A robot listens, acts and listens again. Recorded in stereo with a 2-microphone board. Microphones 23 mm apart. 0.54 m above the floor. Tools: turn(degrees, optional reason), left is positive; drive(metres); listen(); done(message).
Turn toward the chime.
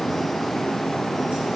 listen()
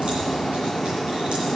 listen()
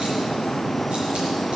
done("I can't make out a chime.")